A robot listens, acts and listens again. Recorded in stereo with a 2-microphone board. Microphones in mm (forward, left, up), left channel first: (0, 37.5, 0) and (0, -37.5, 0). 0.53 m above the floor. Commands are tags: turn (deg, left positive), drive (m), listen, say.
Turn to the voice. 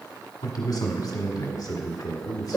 <turn deg="60"/>
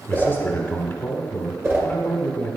<turn deg="35"/>
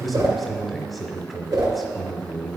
<say>Facing the man speaking.</say>